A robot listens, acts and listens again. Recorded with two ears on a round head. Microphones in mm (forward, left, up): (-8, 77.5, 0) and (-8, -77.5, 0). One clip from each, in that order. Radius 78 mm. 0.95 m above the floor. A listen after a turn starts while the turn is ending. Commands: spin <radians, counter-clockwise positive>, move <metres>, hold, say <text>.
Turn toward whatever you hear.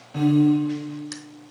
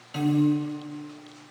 spin -1.57
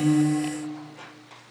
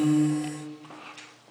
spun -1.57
hold
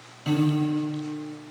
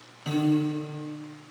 say Found it: a piano, straight ahead, 2 to 4 m away.